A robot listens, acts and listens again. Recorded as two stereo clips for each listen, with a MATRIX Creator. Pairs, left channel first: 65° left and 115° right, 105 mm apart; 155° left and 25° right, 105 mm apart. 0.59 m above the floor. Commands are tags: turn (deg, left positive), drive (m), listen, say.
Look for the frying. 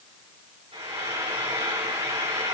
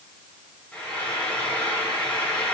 <turn deg="-130"/>
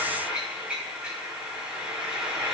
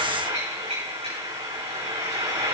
<turn deg="-35"/>
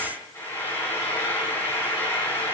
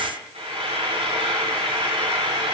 <say>Found it: frying, straight ahead.</say>